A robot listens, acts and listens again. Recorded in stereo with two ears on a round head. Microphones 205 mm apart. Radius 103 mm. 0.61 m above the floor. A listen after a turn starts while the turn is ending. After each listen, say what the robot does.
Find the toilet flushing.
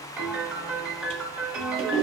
Turn 25° right.
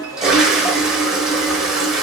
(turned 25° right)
Found it: a toilet flushing, straight ahead.